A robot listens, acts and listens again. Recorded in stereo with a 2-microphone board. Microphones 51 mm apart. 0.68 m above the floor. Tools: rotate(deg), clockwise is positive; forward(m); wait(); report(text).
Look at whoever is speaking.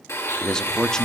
rotate(-30)
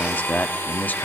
rotate(-135)
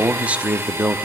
rotate(30)
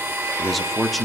report("Found it: a man speaking, straight ahead.")